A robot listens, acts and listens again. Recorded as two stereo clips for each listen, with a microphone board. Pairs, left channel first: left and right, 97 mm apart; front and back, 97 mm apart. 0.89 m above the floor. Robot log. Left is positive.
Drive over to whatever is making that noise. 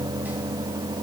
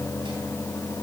cmd idle
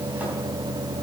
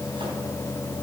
cmd idle
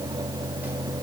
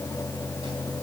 end: I can't make out anything.